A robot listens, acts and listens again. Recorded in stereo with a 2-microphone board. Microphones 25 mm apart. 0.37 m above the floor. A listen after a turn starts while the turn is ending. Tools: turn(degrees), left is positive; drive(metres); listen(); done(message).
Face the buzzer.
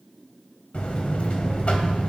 turn(degrees=55)
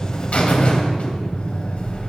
turn(degrees=60)
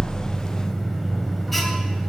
done("Facing the buzzer.")